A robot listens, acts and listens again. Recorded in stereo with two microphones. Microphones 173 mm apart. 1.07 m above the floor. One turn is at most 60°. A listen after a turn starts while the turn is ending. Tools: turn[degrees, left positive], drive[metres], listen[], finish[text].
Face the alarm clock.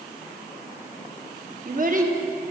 Action: listen[]
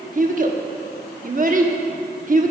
Action: listen[]
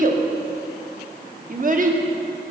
Action: finish[I can't make out an alarm clock, only a child speaking.]